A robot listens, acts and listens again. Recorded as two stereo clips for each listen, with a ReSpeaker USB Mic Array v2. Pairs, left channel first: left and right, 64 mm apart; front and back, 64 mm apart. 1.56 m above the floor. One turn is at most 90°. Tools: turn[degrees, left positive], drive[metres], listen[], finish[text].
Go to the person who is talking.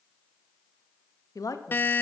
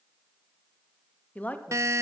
Thought: The woman speaking: 65° left.
Action: turn[65]
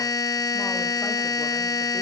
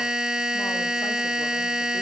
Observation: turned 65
Action: listen[]
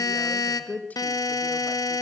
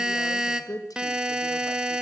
Thought: The woman speaking is now 25° left.
Action: turn[25]
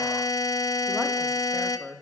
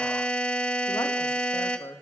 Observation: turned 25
Action: drive[1.0]
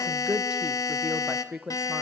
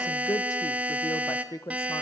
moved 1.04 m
Thought: The woman speaking is now 15° right.
Action: turn[-15]
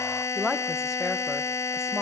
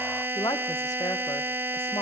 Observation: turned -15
Action: drive[1.0]
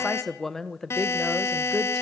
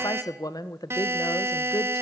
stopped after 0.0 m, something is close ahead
Action: finish[Arrived at the woman speaking, straight ahead.]